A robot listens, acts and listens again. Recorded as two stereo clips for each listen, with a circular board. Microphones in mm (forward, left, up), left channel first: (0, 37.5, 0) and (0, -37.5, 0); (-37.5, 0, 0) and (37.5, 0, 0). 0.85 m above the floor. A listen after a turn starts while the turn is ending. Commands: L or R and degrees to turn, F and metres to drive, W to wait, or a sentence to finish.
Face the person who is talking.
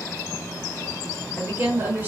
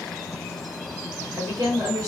R35
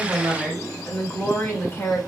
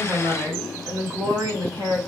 L30
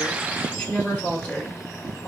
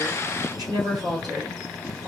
L25
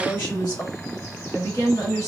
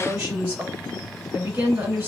L45
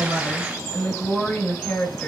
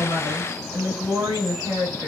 L10
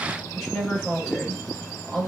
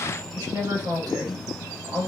Found it: a woman speaking, straight ahead, 1 to 2 m away.